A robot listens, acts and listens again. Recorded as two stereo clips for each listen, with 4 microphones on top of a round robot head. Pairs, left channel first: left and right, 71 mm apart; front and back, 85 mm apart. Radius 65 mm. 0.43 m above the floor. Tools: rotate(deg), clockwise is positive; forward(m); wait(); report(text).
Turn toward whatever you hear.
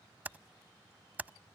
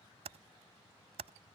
rotate(155)
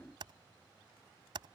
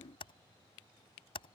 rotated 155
rotate(45)
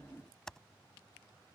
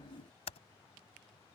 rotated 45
report("Facing the typing on a keyboard.")